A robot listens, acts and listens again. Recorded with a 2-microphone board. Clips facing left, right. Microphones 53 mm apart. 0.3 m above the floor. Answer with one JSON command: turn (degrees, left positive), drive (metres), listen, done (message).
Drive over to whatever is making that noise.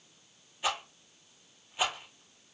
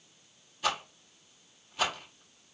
{"turn": 20}
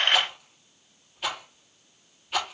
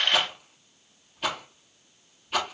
{"drive": 1.0}
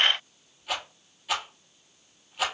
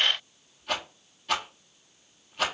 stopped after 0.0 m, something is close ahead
{"done": "Blocked. The rattle is further on, straight ahead."}